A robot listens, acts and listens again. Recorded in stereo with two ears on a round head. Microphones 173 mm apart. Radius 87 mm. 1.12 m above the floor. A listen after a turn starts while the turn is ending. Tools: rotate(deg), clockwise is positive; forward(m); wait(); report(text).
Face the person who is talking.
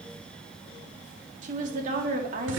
rotate(40)
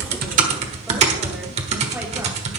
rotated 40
wait()
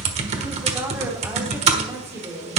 rotate(15)
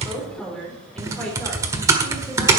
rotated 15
report("Facing the woman speaking.")